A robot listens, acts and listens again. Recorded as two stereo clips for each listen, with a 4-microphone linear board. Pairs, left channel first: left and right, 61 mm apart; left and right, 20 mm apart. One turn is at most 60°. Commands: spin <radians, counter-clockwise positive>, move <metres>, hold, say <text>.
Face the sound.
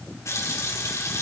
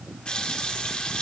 spin 0.87
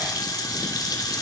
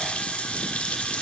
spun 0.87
spin 1.05
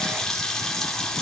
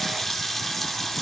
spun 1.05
spin 0.17
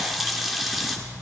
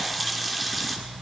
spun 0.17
say Found it: a running tap, straight ahead, 2 to 4 m away.